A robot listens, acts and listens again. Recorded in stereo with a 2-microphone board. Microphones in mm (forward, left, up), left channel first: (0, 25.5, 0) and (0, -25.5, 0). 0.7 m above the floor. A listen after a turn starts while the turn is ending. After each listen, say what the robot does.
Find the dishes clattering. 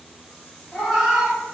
Keep listening.
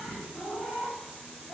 Keep listening.
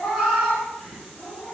I can't make out dishes clattering, only a cat meowing.